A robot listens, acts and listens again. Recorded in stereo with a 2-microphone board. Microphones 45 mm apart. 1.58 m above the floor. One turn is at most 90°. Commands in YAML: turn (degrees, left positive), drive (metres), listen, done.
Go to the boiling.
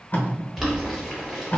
turn: -30
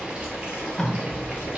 turn: -90
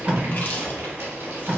turn: -85
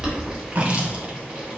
turn: -10
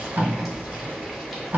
drive: 1.0
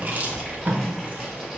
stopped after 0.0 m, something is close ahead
done: "Blocked. The boiling is further on, straight ahead."